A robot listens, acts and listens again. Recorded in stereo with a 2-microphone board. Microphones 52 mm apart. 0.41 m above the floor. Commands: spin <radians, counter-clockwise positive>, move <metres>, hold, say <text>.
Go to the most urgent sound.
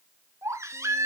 spin -1.57
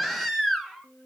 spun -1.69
move 1.0
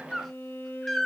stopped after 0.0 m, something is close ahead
say Something is in my way. I am facing the baby crying but have not reached it.